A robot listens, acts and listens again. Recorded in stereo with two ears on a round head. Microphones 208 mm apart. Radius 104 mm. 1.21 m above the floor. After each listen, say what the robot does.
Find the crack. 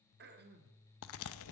Turn 60° left.
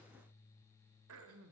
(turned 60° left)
Keep listening.
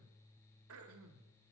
I heard a crack, but can't make it out now. It was about straight ahead or 60° left.